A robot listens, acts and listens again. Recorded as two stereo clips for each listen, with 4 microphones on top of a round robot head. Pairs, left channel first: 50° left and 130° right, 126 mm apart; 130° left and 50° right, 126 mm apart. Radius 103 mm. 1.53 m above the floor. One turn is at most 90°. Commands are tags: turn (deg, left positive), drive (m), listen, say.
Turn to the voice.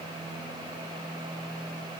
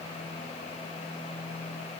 <listen/>
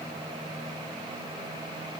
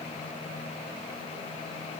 <listen/>
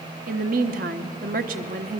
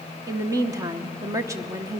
<turn deg="-90"/>
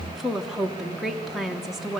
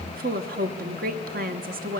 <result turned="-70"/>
<turn deg="-45"/>
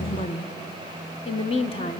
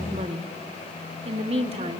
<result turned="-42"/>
<say>Found it: a woman speaking, straight ahead.</say>